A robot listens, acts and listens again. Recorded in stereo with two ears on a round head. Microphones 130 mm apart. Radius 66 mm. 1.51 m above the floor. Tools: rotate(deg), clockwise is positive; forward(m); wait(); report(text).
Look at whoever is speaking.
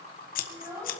rotate(20)
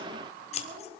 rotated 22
rotate(140)
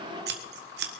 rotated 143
wait()
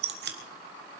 wait()
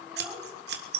report("Facing the child speaking.")